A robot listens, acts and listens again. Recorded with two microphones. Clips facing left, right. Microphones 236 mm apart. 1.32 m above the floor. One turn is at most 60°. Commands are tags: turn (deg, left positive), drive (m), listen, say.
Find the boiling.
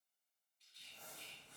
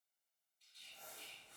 <listen/>
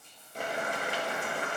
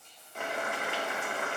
<turn deg="35"/>
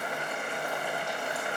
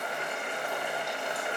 <turn deg="10"/>
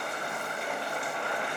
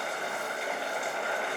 <say>Found it: boiling, straight ahead.</say>